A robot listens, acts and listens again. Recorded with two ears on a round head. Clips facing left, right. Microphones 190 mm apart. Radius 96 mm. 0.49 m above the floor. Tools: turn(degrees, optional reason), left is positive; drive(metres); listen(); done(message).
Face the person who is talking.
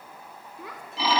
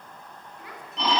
turn(degrees=90)
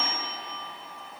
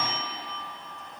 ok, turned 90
listen()
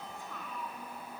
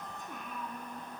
turn(degrees=-20, reason="The child speaking is now 20° right.")
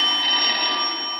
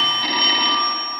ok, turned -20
listen()
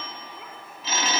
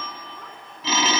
listen()
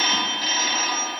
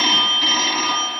done("Facing where the child speaking came from. I can't hear it now.")